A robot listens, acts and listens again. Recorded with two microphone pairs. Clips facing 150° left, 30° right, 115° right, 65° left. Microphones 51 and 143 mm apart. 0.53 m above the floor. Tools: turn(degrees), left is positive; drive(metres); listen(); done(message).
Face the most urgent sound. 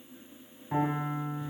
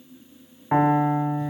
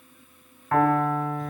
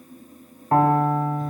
listen()
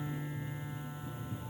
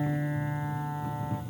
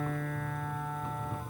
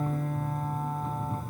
listen()
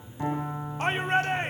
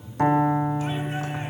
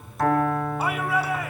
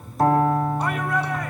turn(degrees=165)
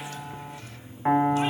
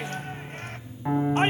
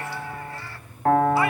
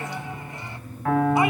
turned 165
listen()
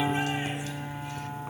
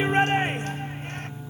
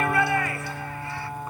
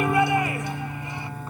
done("Found it: a shout, straight ahead, 1 to 2 m away.")